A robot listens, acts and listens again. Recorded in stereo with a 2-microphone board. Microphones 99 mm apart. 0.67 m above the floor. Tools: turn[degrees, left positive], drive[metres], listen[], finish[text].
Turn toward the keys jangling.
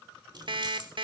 Thought: The keys jangling: about 50° right or 130° right.
Action: turn[-50]
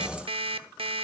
Action: listen[]
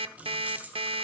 Thought: So it is at 15° right.
Action: turn[-15]
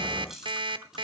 Action: finish[Facing the keys jangling, 2 to 4 m away.]